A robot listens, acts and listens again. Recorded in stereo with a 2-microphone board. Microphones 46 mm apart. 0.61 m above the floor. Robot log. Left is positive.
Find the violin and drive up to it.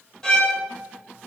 cmd yaw +30
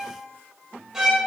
note: So it is at 15° right.
cmd yaw -15
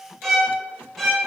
cmd fwd 1.0
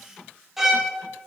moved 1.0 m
note: The violin is now 10° right.
cmd yaw -10
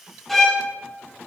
cmd fwd 1.0
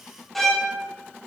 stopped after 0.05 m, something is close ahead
end: I am next to the violin.